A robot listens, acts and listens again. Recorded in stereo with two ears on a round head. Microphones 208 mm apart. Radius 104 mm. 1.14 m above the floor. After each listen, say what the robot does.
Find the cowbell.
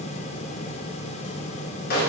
Keep listening.
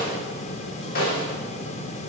Keep listening.
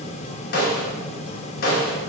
I can't make out a cowbell to turn to.